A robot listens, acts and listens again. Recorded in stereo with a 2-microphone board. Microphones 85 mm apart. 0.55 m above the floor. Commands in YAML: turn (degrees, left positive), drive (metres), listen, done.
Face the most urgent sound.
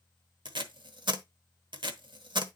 listen: true
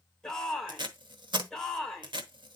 turn: 30
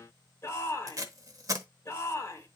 turn: 145
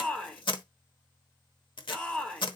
turn: 15
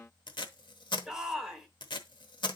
done: "Found it: a shout, straight ahead, 1 to 2 m away."